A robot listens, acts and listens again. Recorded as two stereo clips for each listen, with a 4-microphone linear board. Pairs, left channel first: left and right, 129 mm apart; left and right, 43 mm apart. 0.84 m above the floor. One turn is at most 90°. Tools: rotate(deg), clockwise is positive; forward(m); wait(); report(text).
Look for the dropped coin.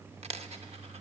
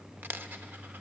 rotate(55)
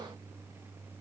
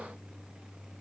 wait()
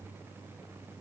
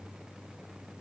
report("I heard a dropped coin, but can't make it out now. It was about straight ahead or 70° right.")